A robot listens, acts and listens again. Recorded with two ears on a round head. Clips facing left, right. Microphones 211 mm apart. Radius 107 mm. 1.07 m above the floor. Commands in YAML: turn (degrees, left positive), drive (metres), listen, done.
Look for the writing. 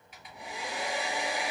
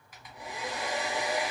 listen: true
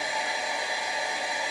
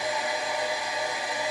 listen: true
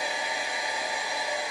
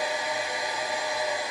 done: "I can't make out writing to turn to."